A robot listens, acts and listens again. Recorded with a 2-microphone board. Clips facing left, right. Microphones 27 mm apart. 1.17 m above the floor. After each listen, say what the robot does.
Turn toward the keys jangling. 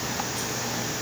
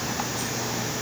Keep listening.
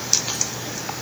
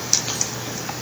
Keep listening.
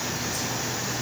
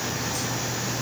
I can't make out keys jangling.